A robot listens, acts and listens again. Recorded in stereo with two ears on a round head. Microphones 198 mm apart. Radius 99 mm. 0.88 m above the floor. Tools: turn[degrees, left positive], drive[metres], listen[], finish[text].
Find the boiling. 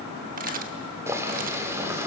Action: turn[-30]
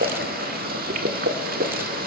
Thought: So it is at 135° right.
Action: turn[-135]
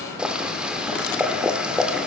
Action: finish[Facing the boiling, 1 to 2 m away.]